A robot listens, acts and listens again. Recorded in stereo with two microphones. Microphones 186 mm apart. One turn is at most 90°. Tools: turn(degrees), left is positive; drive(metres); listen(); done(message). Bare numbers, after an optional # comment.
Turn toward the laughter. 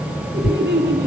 # The laughter: about 65° right or 115° right.
turn(-65)
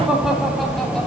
done("Found it: laughter, straight ahead, 2 to 4 m away.")